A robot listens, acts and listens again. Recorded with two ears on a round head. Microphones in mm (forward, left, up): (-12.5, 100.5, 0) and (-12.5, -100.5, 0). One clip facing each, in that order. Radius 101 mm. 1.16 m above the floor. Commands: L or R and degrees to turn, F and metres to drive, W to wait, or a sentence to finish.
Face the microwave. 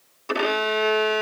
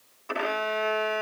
W
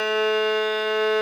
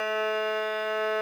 W
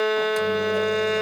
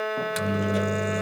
R20
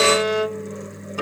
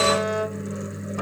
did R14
Facing the microwave.